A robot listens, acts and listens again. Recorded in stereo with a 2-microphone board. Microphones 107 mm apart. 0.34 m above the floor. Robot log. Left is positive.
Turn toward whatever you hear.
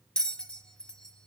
cmd yaw +30
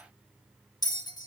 note: So it is at 140° left.
cmd yaw +140
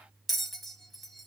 end: Facing the bell.